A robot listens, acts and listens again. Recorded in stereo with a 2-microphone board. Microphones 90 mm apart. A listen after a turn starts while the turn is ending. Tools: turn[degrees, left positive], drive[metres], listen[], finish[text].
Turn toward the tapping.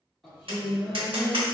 Thought: The tapping: about 70° right or 110° right.
Action: turn[-70]
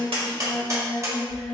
Thought: So it is at 35° right.
Action: turn[-35]
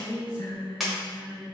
Action: finish[Facing the tapping, 1 to 2 m away.]